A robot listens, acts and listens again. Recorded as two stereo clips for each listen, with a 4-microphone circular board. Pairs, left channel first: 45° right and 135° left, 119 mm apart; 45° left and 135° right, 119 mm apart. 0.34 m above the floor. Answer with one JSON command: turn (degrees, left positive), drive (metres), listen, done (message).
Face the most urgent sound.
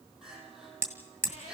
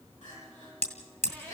{"turn": 50}
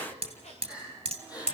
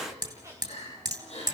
{"turn": 10}
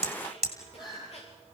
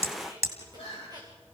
{"done": "Facing the crying."}